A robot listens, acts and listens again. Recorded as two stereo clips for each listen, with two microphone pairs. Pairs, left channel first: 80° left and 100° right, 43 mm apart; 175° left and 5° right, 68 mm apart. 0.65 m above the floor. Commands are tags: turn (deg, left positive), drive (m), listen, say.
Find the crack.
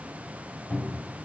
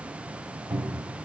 <listen/>
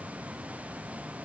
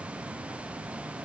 <listen/>
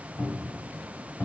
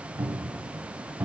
<say>I can't make out a crack, only a cupboard door.</say>